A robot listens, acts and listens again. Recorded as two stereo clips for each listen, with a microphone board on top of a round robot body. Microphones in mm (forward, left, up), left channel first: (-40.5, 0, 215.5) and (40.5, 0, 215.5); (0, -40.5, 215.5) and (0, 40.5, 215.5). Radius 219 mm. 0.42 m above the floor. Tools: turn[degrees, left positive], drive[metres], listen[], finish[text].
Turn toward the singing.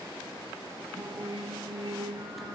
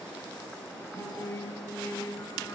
Thought: The singing: 35° right.
Action: turn[-35]
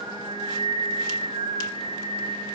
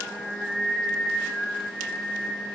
Action: finish[Facing the singing, 2 to 4 m away.]